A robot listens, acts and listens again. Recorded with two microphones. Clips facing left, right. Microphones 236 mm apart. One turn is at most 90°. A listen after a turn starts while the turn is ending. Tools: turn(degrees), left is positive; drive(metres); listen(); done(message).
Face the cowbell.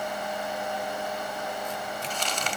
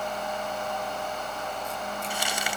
listen()
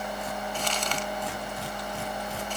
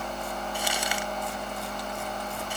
listen()
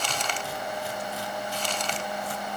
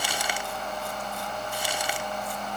done("I can't make out a cowbell to turn to.")